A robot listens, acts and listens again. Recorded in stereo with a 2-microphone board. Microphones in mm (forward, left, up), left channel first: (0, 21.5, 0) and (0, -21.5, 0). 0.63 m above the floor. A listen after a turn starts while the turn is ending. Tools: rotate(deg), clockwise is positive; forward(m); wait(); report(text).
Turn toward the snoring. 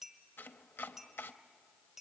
wait()
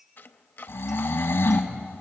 rotate(-90)
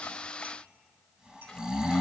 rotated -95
rotate(20)
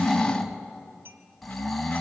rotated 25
report("Facing the snoring.")